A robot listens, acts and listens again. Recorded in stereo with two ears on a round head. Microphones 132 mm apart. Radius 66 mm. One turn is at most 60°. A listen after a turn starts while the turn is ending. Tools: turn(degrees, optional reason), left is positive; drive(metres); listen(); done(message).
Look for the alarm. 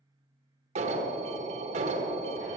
turn(degrees=-55, reason="The alarm: about 55° right or 125° right.")
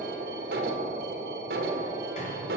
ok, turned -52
turn(degrees=-60, reason="So it is at 75° right.")
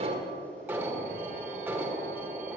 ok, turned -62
turn(degrees=-10, reason="The alarm is now 10° right.")
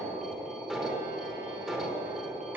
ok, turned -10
done("Facing the alarm, 1 to 2 m away.")